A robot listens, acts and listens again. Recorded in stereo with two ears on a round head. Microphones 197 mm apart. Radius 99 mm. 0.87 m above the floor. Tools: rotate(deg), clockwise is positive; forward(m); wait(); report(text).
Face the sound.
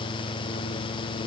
wait()
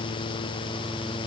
wait()
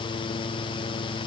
report("I can't make out anything to turn to.")